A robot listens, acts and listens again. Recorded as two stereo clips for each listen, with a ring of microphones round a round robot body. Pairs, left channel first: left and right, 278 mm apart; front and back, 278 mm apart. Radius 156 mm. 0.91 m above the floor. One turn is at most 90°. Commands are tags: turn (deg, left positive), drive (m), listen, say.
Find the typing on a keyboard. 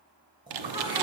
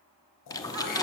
<turn deg="-75"/>
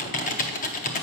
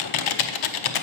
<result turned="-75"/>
<turn deg="25"/>
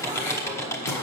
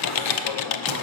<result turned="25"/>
<turn deg="10"/>
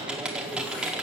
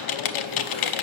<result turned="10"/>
<say>Found it: typing on a keyboard, straight ahead.</say>